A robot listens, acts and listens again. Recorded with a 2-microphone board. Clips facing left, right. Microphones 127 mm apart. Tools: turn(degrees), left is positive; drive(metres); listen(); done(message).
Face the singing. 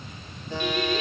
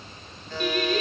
turn(degrees=-50)
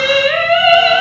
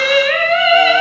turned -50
turn(degrees=10)
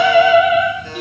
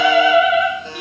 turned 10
done("Facing the singing.")